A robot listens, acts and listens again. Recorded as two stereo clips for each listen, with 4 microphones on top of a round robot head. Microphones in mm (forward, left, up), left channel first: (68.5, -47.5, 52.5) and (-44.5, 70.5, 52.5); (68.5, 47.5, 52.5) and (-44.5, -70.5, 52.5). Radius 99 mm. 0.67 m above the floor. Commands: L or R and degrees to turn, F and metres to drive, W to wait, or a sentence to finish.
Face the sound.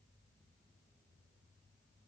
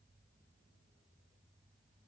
W
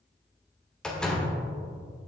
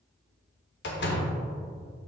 L40
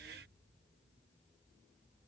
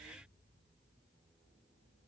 Facing where the door slam came from. I can't hear it now.